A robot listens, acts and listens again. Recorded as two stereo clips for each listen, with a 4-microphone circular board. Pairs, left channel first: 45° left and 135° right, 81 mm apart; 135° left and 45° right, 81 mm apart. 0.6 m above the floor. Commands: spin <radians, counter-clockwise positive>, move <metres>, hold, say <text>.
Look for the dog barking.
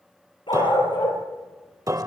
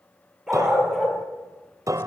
spin 0.79
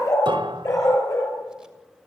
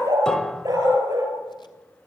say Facing the dog barking.